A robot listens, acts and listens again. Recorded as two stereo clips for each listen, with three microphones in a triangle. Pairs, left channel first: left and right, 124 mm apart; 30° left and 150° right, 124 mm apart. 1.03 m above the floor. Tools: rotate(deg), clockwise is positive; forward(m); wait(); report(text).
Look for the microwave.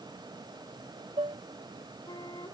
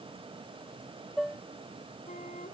wait()
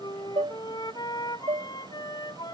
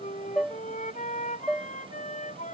wait()
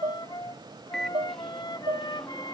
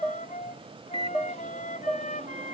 rotate(-175)
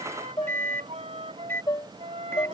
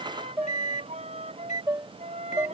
rotate(-20)
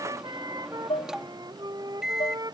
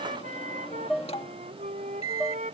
report("Facing the microwave.")